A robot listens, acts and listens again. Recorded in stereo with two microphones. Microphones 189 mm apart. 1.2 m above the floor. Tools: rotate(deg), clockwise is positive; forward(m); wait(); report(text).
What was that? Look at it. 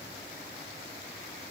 wait()
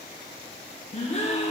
rotate(-35)
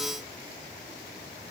wait()
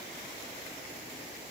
report("I heard a gasp, but can't make it out now. It was about straight ahead or 110° left.")